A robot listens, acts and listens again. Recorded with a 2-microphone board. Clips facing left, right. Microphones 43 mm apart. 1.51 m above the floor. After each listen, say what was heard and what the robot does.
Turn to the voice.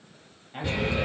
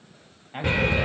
The man speaking: about 30° right or 150° right. Turn 30° right.
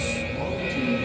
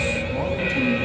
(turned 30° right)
Keep listening.
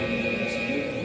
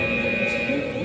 Keep listening.
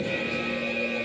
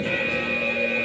I heard a man speaking, but can't make it out now. It was about straight ahead or 120° right.